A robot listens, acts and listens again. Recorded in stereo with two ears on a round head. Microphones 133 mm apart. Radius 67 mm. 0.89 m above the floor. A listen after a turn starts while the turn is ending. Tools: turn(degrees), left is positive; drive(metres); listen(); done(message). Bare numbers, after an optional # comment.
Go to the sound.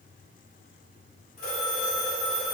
# The phone ringing: about 60° left or 120° left.
turn(60)
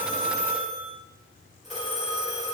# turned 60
drive(1.0)
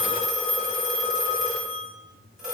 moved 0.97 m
drive(1.0)
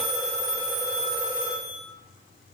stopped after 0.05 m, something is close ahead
done("Arrived at the phone ringing, straight ahead.")